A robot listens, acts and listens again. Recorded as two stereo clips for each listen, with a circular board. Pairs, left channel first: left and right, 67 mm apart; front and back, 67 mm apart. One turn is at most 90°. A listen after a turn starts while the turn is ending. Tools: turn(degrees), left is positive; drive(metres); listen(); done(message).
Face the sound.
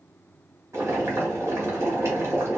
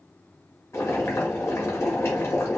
turn(degrees=-50)
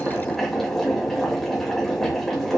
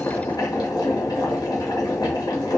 done("Facing the boiling.")